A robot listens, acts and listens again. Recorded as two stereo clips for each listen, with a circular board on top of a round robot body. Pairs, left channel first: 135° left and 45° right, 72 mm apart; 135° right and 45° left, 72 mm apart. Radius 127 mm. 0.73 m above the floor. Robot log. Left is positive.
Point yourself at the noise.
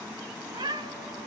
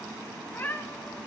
note: The cat meowing: 65° right.
cmd yaw -65
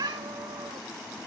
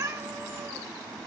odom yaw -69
note: The cat meowing is now 10° right.
cmd yaw -10
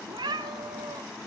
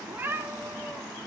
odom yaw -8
note: The cat meowing is now 20° right.
cmd yaw -20
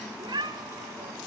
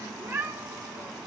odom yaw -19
note: The cat meowing is now 20° right.
cmd yaw -20
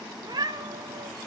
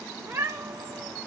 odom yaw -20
note: The cat meowing is now 15° right.
cmd yaw -15
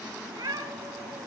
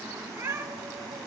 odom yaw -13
end: Found it: a cat meowing, straight ahead, 2 to 4 m away.